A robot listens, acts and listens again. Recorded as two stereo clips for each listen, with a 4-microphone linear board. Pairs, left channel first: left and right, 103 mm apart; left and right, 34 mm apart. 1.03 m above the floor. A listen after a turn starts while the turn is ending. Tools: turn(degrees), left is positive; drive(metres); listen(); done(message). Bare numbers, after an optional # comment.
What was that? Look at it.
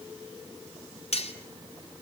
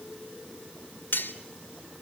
turn(90)
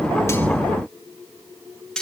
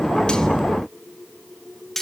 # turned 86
done("Found it: cutlery clinking, straight ahead, 2 to 4 m away.")